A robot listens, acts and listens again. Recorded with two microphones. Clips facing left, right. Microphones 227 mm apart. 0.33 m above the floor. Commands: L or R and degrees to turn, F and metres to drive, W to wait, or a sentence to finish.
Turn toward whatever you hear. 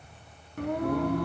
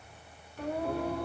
L65
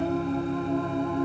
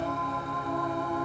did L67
L25
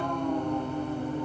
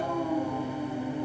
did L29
R10
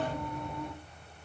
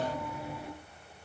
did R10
Facing the singing, 2 to 4 m away.